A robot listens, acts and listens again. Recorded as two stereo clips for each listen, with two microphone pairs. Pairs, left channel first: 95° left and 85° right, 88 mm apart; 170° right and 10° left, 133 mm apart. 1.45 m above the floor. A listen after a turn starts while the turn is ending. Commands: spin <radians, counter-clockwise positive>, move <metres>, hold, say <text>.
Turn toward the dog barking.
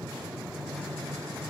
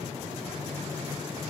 hold
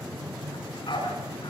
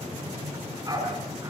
spin 1.31
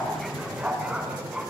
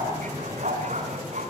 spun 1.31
say Found it: a dog barking, straight ahead, over 4 m away.